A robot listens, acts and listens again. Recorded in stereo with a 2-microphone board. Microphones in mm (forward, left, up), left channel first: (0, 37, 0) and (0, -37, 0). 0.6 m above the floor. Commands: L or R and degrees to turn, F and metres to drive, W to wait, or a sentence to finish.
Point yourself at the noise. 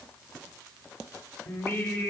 L40
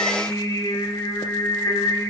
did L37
L100
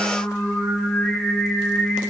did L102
Facing the singing, 2 to 4 m away.